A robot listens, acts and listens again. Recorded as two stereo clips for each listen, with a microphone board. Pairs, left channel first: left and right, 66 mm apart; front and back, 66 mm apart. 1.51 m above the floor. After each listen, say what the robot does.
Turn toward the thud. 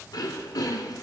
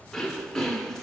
Keep listening.
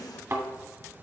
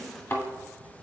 Turn 50° right.
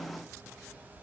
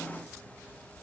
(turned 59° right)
Turn 10° left.
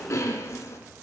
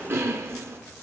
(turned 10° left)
Facing where the thud came from. I can't hear it now.